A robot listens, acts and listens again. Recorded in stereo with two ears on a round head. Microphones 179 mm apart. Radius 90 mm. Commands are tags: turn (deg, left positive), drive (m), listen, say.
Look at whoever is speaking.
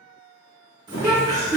<turn deg="-30"/>
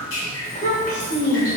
<turn deg="45"/>
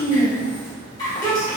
<turn deg="35"/>
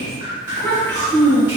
<turn deg="10"/>
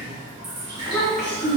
<say>Found it: a child speaking, straight ahead.</say>